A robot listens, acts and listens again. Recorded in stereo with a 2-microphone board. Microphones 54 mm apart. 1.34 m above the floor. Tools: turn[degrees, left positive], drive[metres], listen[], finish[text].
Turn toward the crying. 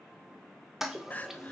Thought: The crying: about 30° left or 150° left.
Action: turn[30]
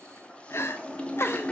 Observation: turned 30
Thought: So it is at 115° left.
Action: turn[115]
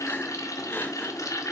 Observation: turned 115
Action: listen[]
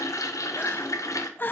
Thought: The crying is now 45° left.
Action: turn[45]
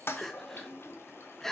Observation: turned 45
Action: finish[Facing the crying, under 1 m away.]